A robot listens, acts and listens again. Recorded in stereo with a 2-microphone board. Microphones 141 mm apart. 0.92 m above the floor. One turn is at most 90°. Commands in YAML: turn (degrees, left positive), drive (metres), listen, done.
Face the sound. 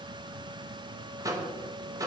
turn: -25
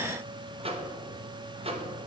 turn: -90
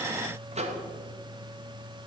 turn: -60
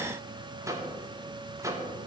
turn: -25
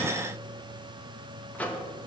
turn: 10
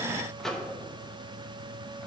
done: "Found it: a microwave, straight ahead, under 1 m away."